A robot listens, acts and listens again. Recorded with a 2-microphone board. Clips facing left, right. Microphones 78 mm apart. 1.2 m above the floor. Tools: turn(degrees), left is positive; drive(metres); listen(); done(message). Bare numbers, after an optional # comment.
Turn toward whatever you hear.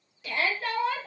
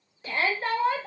# The shout: about 35° right or 145° right.
turn(-35)
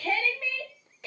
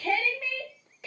done("Found it: a shout, straight ahead, 1 to 2 m away.")